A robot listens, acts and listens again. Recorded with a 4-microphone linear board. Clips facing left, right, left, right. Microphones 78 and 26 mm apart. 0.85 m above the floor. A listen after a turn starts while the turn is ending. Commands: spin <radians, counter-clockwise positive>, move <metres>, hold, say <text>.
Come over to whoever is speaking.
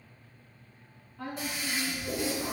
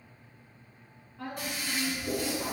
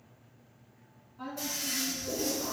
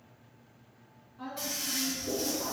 spin -0.52
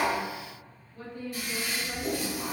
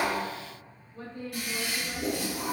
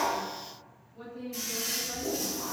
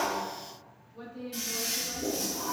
spin -2.53
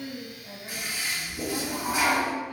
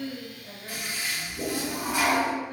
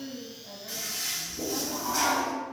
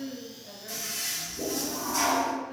spin -0.52
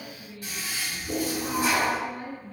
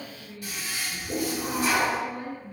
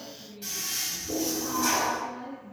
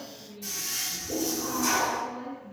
spin -0.26
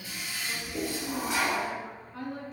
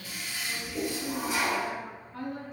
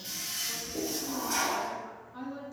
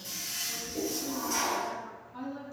move 1.0
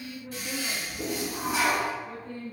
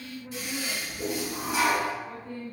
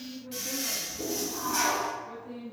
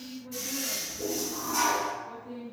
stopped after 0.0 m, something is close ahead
say Blocked. The woman speaking is further on, straight ahead.